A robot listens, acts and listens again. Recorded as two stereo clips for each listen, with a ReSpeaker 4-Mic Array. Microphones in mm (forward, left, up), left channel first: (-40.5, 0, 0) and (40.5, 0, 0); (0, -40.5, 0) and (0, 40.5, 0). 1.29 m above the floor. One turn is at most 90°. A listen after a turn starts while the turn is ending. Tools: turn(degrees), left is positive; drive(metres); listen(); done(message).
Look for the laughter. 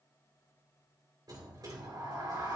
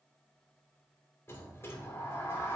listen()
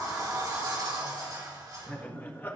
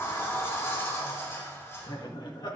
turn(degrees=-90)
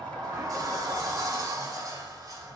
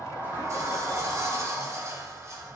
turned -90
turn(degrees=-25)
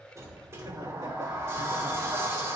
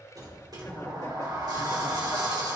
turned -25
listen()
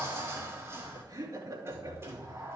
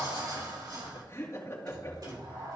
turn(degrees=-35)
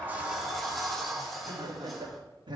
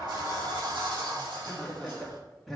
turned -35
done("Found it: laughter, straight ahead.")